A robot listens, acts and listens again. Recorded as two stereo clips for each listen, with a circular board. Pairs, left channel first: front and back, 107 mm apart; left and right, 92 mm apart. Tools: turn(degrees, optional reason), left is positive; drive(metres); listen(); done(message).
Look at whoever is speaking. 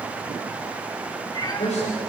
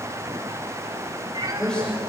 turn(degrees=10, reason="The man speaking: 10° left.")
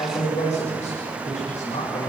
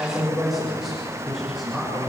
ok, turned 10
done("Facing the man speaking, over 4 m away.")